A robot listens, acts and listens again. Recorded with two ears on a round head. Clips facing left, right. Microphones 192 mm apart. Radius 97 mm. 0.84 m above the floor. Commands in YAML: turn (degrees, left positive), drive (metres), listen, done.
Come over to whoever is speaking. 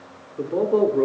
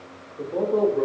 turn: 45
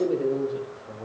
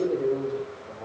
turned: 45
drive: 1.0
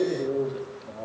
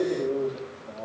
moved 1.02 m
drive: 1.0
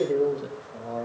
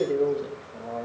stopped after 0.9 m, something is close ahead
done: "I am next to the man speaking."